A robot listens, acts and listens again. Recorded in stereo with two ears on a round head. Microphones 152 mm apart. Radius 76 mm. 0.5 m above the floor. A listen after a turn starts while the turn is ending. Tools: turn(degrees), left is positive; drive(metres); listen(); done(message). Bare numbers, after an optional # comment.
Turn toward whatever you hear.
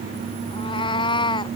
# The cat meowing: about 25° left or 155° left.
turn(25)
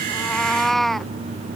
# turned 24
done("Found it: a cat meowing, straight ahead.")